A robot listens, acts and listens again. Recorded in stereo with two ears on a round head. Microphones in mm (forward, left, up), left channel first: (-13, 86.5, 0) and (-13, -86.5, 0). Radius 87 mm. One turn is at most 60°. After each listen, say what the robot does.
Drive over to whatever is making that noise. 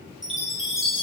Turn 30° right.
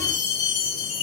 Turn 25° left.
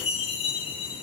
Turn 30° left.
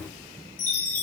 Turn 10° left.
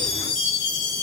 Drive 1.0 m forward.
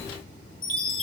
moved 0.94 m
Drive 1.0 m forward.
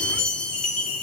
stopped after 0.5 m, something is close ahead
I am next to the chime.